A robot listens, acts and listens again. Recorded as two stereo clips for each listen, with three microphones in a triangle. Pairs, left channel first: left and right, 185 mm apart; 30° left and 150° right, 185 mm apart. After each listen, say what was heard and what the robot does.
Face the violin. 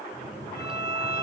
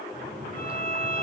The violin: 70° left. Turn 70° left.
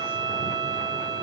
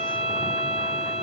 The violin is now 20° right. Turn 20° right.
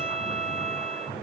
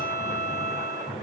Found it: a violin, straight ahead, 1 to 2 m away.